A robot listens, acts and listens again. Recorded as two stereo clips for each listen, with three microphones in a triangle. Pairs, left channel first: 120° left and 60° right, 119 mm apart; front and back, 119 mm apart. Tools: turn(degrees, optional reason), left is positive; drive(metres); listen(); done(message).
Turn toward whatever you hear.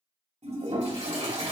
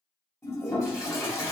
turn(degrees=-60, reason="The toilet flushing: 60° right.")
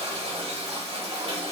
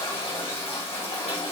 turn(degrees=-35, reason="The toilet flushing is now 35° right.")
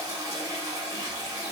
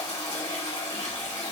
done("Found it: a toilet flushing, straight ahead, 2 to 4 m away.")